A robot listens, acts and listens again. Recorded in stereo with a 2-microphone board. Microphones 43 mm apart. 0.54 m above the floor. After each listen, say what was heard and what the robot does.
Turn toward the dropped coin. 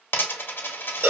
The dropped coin: about 65° left or 115° left. Turn 65° left.
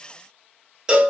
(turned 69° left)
Keep listening.
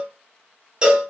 I heard a dropped coin, but can't make it out now. It was about 5° right or 45° left.